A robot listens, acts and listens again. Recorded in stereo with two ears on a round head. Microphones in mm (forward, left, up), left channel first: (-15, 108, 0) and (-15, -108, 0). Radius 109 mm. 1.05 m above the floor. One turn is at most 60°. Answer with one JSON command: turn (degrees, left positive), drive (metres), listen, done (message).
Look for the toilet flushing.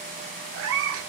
{"listen": true}
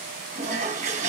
{"turn": -35}
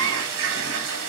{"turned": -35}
{"turn": -60}
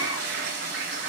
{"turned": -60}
{"turn": -50}
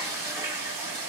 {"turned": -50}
{"turn": -15}
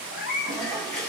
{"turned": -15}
{"done": "Found it: a toilet flushing, straight ahead."}